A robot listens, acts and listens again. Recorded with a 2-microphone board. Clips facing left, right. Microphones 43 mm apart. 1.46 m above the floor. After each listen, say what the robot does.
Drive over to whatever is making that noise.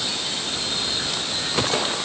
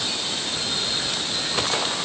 Keep listening.
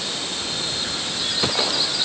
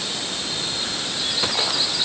Keep listening.
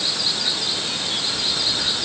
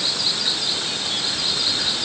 I can't make out anything.